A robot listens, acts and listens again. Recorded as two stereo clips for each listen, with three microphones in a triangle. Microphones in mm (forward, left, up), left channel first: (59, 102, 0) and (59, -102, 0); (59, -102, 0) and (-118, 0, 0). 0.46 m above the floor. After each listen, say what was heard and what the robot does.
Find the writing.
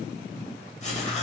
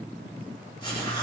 The writing: 30° left. Turn 30° left.
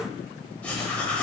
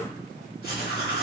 Facing the writing.